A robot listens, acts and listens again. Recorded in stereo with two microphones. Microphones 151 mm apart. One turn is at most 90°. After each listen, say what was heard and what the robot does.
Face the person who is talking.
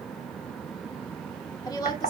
The woman speaking: about 25° left or 155° left. Turn 25° left.
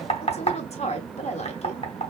So it is at 125° left. Turn 90° left.
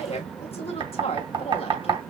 The woman speaking is now 50° left. Turn 50° left.
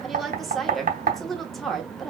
Found it: a woman speaking, straight ahead, 1 to 2 m away.